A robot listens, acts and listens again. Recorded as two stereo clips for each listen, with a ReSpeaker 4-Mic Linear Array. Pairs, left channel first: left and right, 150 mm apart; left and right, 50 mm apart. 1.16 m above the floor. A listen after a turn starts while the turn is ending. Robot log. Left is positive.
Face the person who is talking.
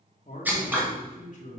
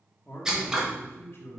note: The man speaking: about 55° left or 125° left.
cmd yaw +55
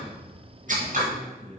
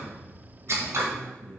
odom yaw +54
end: Found it: a man speaking, straight ahead, 2 to 4 m away.